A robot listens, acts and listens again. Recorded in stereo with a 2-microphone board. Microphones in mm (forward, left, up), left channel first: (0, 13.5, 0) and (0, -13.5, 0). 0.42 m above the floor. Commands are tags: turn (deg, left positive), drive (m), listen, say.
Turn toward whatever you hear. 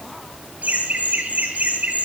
<turn deg="-90"/>
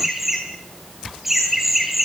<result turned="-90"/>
<say>Facing the laughter.</say>